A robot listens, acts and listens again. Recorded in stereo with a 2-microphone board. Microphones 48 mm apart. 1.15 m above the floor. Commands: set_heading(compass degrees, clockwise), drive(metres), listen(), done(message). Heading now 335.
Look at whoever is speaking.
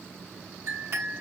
listen()
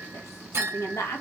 set_heading(245)
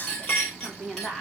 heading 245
done("Found it: a woman speaking, straight ahead, 1 to 2 m away.")